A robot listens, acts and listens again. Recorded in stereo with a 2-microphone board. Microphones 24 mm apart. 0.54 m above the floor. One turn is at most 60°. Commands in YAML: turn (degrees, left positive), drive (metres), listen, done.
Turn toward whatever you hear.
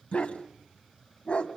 turn: 55
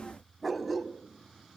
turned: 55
done: "Facing the dog barking."